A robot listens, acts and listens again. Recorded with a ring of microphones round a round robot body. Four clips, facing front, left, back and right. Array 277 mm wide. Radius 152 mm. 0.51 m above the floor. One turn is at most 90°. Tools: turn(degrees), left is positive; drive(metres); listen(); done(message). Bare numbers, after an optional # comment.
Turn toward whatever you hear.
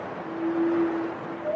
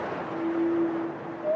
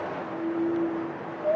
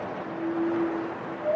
listen()
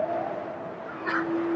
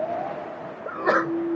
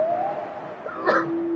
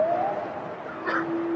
# The sneeze: 145° left.
turn(90)
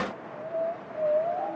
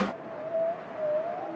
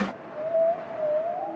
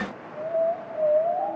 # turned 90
# Nothing new. It was at 55° left.
turn(55)
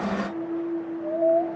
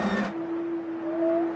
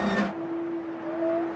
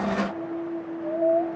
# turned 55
done("I heard a sneeze from this way, but can't make it out now.")